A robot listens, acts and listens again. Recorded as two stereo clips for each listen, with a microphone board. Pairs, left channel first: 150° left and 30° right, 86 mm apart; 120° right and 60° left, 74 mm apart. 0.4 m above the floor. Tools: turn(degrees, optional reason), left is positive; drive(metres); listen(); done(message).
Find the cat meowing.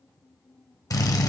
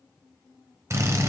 listen()
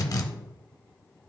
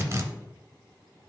listen()
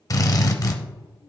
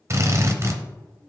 done("I can't make out a cat meowing to turn to.")